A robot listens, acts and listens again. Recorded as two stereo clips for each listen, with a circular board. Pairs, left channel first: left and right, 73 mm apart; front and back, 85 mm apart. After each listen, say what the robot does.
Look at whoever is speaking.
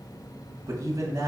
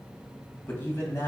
Turn 60° right.
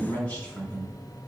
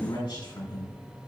Turn 20° left.
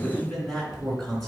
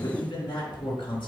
Facing the man speaking.